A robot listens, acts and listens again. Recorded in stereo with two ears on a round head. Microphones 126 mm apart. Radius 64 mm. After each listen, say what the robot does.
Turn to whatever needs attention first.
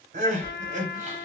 Turn 55° right.
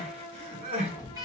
Turn 50° right.
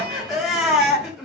Found it: crying, straight ahead, 1 to 2 m away.